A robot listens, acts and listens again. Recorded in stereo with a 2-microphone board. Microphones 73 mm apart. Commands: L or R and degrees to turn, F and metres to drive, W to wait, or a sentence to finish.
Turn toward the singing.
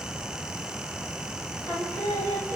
L35
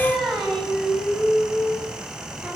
Found it: singing, straight ahead.